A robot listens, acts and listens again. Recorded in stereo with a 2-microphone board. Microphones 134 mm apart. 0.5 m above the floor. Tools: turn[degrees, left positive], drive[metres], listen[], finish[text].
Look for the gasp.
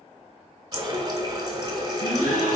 Action: turn[90]
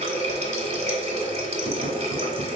Action: finish[I heard a gasp from this way, but can't make it out now.]